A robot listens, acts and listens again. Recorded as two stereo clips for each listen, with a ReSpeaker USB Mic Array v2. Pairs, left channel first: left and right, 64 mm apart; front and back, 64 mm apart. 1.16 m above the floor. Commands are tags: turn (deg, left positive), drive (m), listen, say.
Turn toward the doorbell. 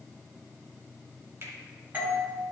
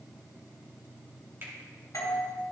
<turn deg="-25"/>
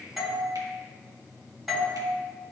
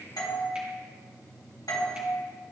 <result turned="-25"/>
<say>Found it: a doorbell, straight ahead, 1 to 2 m away.</say>